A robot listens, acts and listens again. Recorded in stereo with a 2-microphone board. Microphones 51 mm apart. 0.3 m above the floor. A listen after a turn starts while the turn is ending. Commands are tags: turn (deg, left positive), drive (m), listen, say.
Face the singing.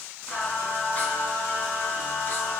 <turn deg="45"/>
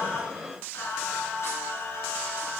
<turn deg="65"/>
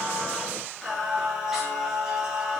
<turn deg="-10"/>
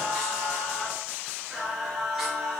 <say>Found it: singing, straight ahead.</say>